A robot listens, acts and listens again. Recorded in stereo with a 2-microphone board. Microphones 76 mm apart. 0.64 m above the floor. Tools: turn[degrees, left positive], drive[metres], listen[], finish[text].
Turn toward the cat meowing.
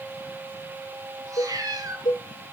Thought: The cat meowing: about 50° right or 130° right.
Action: turn[-50]
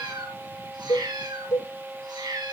Thought: So it is at 75° right.
Action: turn[-75]
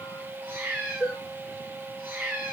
Thought: The cat meowing is now 25° right.
Action: turn[-25]
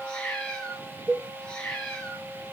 Thought: The cat meowing is now 15° left.
Action: turn[15]
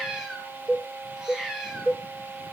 Action: finish[Facing the cat meowing.]